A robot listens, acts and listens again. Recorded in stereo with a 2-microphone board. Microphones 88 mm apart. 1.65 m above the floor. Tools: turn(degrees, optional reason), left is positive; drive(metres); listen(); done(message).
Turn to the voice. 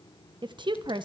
turn(degrees=-60, reason="The woman speaking: about 60° right or 120° right.")
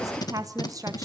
turn(degrees=-45, reason="So it is at 45° right.")
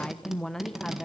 done("Found it: a woman speaking, straight ahead.")